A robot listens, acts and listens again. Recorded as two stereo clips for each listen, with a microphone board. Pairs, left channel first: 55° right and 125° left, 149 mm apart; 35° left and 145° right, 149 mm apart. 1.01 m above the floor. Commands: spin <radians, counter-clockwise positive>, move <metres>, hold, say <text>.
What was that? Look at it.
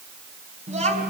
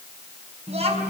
spin 2.97
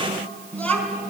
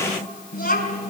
spin 0.44
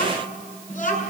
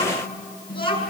spin -0.35
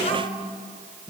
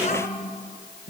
say Facing the child speaking, over 4 m away.